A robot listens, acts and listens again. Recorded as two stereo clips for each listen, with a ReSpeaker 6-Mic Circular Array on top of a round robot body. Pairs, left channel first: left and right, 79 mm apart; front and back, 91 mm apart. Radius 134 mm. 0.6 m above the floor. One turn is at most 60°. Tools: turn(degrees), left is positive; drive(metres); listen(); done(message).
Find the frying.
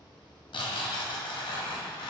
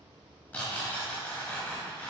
listen()
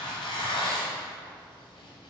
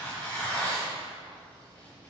listen()
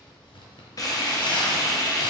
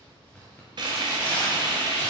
turn(degrees=60)
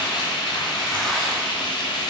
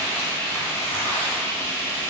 turn(degrees=60)
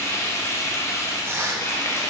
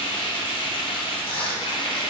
turn(degrees=35)
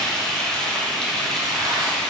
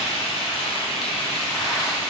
turn(degrees=10)
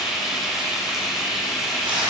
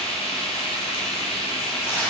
done("Facing the frying, under 1 m away.")